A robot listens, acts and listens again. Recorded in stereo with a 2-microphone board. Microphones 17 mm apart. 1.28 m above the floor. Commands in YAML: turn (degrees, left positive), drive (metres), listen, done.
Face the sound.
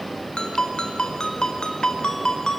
turn: 90
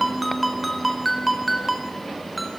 done: "Facing the ringtone, over 4 m away."